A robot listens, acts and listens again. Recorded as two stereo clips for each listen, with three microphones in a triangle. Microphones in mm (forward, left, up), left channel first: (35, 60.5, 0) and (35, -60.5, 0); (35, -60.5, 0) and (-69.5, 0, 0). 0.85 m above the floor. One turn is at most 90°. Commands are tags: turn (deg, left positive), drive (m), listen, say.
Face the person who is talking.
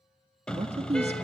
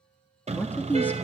<turn deg="-90"/>
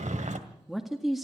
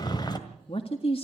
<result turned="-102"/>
<say>Facing the man speaking.</say>